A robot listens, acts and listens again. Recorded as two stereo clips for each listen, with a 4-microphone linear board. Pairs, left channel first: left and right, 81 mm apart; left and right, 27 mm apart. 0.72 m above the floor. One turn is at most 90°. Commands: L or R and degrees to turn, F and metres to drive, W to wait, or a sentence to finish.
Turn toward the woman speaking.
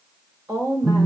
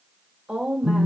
R50
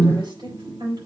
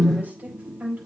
R70
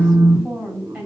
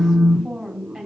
Found it: a woman speaking, straight ahead.